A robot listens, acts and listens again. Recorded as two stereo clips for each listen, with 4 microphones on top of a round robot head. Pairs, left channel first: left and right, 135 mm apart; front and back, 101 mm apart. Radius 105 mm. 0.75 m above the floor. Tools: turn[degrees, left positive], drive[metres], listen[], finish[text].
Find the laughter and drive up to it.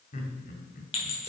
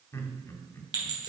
Thought: The laughter: 60° left.
Action: turn[60]
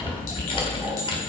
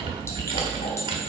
Action: listen[]
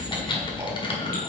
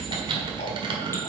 Action: listen[]
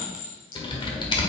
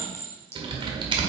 Action: finish[Facing where the laughter came from. I can't hear it now. I did not reach it.]